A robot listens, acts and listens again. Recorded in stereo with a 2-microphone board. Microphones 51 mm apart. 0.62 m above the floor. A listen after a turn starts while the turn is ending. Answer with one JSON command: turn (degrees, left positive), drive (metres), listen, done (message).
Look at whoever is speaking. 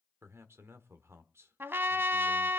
{"turn": -65}
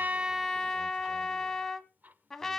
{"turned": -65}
{"listen": true}
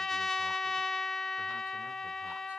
{"listen": true}
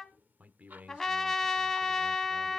{"turn": -35}
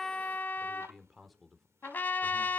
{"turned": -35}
{"done": "Found it: a man speaking, straight ahead."}